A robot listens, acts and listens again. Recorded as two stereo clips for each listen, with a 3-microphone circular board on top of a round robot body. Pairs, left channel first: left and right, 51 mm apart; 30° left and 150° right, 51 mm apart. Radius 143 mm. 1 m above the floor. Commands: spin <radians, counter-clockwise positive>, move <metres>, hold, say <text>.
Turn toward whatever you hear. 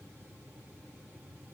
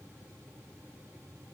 hold
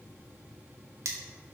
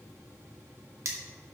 spin -2.09
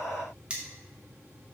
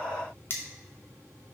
spin -0.35
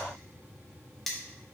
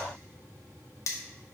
say Facing the cutlery clinking.